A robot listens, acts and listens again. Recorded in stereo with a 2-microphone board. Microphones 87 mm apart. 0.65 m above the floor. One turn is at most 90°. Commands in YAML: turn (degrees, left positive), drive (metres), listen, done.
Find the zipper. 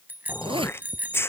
turn: -90
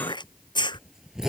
done: "Facing the zipper."